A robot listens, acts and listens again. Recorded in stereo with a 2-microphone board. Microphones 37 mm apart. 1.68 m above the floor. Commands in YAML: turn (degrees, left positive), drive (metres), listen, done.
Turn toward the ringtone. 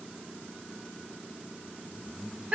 listen: true
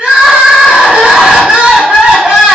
listen: true
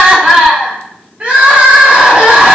done: "I can't make out a ringtone, only crying."